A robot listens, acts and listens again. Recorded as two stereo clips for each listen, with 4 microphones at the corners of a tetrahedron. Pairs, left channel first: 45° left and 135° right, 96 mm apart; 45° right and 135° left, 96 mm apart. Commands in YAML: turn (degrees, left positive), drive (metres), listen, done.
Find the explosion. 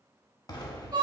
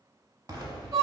turn: 90
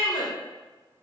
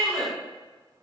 done: "I heard an explosion from this way, but can't make it out now."